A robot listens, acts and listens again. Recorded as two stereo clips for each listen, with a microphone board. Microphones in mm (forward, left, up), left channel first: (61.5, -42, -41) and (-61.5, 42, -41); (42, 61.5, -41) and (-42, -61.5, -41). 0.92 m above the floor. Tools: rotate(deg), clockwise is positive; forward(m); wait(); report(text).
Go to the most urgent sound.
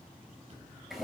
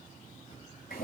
wait()
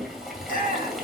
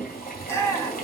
rotate(15)
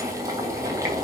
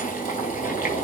wait()
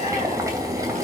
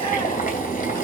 wait()
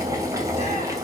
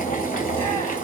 report("I heard a shout from this way, but can't make it out now. I did not reach it.")